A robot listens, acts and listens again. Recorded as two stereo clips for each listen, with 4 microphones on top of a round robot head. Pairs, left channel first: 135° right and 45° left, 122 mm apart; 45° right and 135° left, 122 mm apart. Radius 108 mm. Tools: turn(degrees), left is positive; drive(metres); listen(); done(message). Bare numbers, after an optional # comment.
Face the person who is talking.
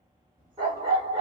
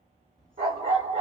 # The child speaking: 40° left.
turn(40)
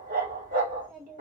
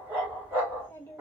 # The child speaking is now 30° left.
turn(30)
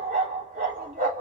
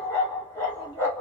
listen()
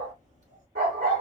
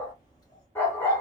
# The child speaking is now 15° left.
turn(15)
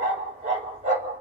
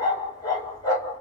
listen()
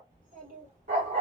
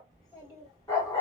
# The child speaking is now 15° left.
turn(15)
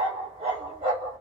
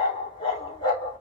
listen()
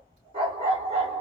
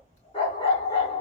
done("Found it: a child speaking, straight ahead, 2 to 4 m away.")